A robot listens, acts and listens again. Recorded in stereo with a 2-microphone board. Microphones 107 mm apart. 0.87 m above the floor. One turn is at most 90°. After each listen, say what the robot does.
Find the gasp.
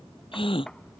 Turn 60° left.
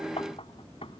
Keep listening.
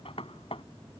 I heard a gasp, but can't make it out now. It was about straight ahead or 60° left.